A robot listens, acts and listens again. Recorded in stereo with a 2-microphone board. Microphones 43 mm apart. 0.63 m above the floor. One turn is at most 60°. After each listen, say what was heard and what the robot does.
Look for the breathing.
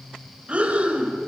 The breathing: about 25° right or 155° right. Turn 25° right.
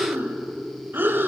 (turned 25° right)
So it is at 130° right. Turn 60° right.
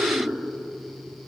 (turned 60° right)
The breathing is now 75° right. Turn 60° right.
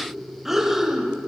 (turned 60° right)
The breathing is now 10° right. Turn 10° right.
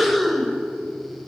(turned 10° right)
Found it: breathing, straight ahead.